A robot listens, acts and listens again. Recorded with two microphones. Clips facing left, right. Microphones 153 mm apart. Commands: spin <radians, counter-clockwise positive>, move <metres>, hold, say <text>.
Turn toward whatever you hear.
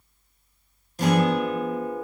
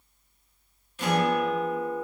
spin 0.70
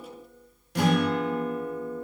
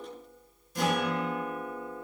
spin 1.83
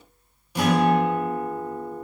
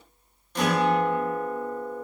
spin 0.17
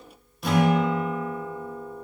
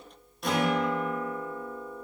say Facing the guitar, under 1 m away.